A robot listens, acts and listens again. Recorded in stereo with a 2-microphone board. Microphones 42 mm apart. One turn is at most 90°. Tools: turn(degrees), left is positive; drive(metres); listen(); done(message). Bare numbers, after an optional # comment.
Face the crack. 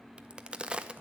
# The crack: about 20° right or 160° right.
turn(-20)
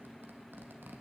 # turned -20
listen()
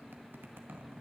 done("I heard a crack, but can't make it out now. It was about straight ahead or 140° right.")